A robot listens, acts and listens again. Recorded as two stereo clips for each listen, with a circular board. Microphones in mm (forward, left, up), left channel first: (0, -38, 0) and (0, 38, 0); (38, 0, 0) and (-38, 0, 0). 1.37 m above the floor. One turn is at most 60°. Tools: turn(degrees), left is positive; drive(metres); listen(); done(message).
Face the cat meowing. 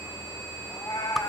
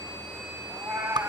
turn(degrees=-60)
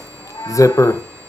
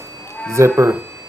turn(degrees=-60)
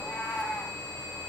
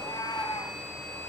turn(degrees=-20)
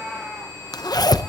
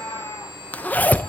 turn(degrees=-10)
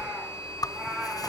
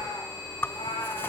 done("Found it: a cat meowing, straight ahead.")